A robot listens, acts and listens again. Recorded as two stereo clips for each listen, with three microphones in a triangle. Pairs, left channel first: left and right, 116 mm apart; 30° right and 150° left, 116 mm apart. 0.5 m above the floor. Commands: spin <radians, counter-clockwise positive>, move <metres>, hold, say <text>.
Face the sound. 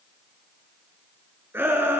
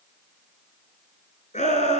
spin -0.35
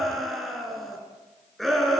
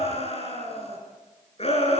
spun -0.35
say Facing the shout.